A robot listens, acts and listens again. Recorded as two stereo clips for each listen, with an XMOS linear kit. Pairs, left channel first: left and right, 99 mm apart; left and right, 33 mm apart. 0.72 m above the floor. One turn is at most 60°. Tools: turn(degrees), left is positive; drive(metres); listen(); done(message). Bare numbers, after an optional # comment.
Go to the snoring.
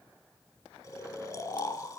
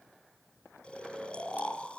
# The snoring: about 40° left or 140° left.
turn(40)
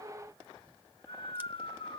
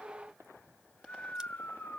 # So it is at 100° left.
turn(60)
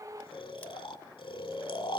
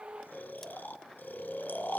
# The snoring is now 60° left.
turn(60)
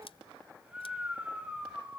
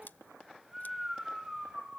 # The snoring is now 15° right.
turn(-15)
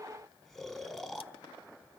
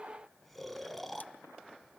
drive(1.0)
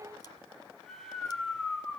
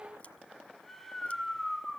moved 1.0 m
drive(1.0)
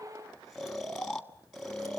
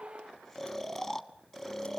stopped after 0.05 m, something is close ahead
done("Arrived at the snoring, straight ahead.")